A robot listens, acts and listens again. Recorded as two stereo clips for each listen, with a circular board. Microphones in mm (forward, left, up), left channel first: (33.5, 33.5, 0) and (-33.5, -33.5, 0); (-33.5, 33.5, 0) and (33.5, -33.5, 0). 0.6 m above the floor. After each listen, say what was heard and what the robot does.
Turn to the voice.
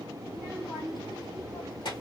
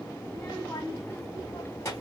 The child speaking: 70° left. Turn 70° left.
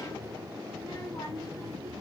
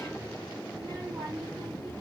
The child speaking is now 20° right. Turn 20° right.
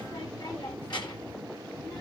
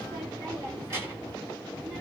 Found it: a child speaking, straight ahead.